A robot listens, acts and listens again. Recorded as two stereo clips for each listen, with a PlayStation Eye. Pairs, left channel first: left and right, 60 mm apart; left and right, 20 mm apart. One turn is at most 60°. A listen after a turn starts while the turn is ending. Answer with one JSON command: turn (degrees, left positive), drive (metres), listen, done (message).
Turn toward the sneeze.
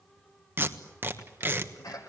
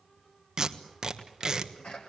{"turn": 60}
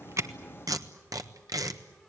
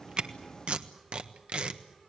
{"turn": 30}
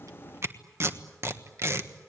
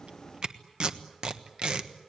{"done": "Facing where the sneeze came from. I can't hear it now."}